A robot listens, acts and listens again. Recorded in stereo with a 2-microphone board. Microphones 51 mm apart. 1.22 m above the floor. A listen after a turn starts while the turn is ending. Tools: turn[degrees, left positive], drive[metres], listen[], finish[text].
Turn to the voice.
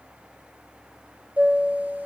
Action: listen[]
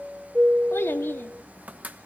Thought: The child speaking: about 55° left or 125° left.
Action: turn[55]
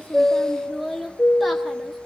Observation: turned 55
Action: finish[Facing the child speaking.]